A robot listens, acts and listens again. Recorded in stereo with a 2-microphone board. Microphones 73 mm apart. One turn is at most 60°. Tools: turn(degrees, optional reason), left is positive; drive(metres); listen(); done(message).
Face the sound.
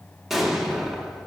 turn(degrees=-30)
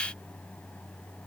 listen()
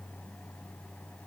done("I heard an explosion, but can't make it out now. It was about 25° left or 145° right.")